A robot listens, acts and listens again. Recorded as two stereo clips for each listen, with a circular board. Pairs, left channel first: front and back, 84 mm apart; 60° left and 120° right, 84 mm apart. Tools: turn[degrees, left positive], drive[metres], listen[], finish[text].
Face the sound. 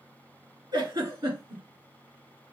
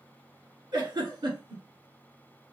Thought: The giggle: 150° right.
Action: turn[-150]
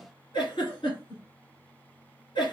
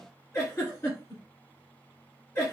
Action: finish[Found it: a giggle, straight ahead.]